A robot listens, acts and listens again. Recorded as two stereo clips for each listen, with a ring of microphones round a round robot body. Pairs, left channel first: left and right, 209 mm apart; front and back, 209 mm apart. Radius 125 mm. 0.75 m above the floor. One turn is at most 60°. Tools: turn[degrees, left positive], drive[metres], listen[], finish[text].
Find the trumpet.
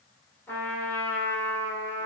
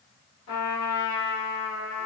Thought: The trumpet: 10° left.
Action: turn[10]
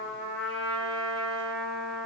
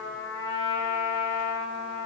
Action: finish[Facing the trumpet, 1 to 2 m away.]